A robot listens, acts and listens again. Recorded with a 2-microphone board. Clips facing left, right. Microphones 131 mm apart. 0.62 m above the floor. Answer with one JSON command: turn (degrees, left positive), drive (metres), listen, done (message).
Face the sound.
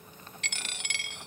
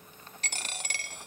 {"turn": -40}
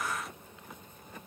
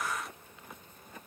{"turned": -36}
{"listen": true}
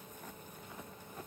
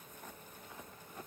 {"done": "I heard a dropped coin, but can't make it out now. It was about straight ahead or 105° right."}